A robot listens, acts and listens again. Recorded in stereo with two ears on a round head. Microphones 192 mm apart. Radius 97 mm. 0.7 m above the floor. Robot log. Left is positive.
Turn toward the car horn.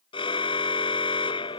note: The car horn: about 25° left or 155° left.
cmd yaw +25
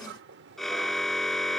end: Facing the car horn.